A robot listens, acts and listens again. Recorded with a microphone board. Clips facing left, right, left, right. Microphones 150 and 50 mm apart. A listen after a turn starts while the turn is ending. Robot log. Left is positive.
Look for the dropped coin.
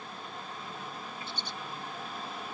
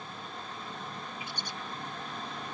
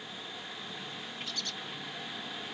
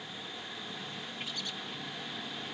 cmd idle
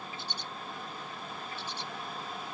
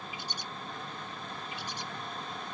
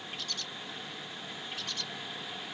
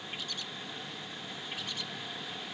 cmd idle
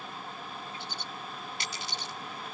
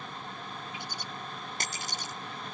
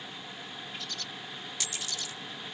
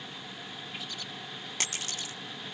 note: The dropped coin: about 45° right or 135° right.
cmd yaw -45
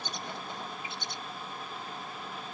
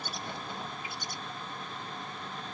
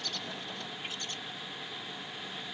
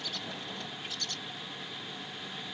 cmd idle
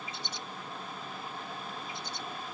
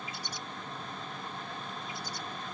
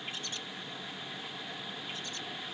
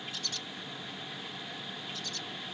end: I heard a dropped coin, but can't make it out now. It was about straight ahead or 90° right.